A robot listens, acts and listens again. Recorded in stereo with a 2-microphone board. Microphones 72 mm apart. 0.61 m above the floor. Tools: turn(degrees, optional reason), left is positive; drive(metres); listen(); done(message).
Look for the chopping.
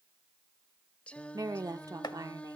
turn(degrees=70, reason="The chopping: about 70° left or 110° left.")
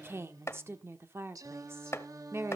turn(degrees=35, reason="So it is at 35° left.")
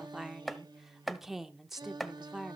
done("Facing the chopping.")